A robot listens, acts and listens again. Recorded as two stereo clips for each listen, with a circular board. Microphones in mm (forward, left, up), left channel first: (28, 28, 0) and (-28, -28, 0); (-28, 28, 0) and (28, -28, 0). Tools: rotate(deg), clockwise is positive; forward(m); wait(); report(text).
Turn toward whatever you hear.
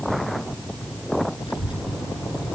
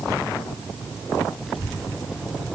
rotate(-45)
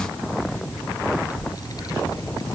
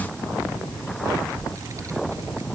report("Facing the child speaking.")